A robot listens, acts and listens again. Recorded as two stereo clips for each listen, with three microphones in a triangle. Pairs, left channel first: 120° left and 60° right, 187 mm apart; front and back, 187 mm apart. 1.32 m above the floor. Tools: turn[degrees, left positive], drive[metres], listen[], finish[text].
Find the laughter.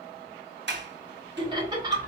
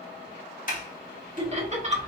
Thought: The laughter: 130° right.
Action: turn[-130]
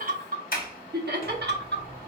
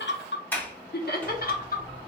Thought: The laughter is now 40° right.
Action: turn[-40]
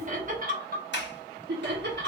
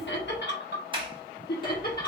Thought: The laughter is now 35° right.
Action: turn[-35]
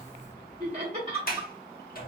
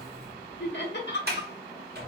Action: finish[Facing the laughter, 1 to 2 m away.]